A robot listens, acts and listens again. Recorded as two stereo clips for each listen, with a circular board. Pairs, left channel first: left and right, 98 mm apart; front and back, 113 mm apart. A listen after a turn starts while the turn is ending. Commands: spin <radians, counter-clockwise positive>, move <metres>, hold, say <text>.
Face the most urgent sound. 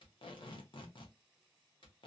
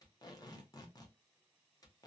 hold
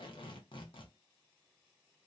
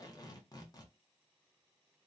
hold
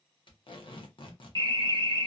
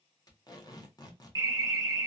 spin -2.18
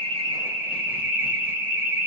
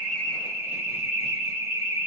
spin -0.35
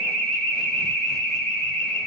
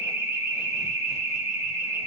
say Facing the alarm, under 1 m away.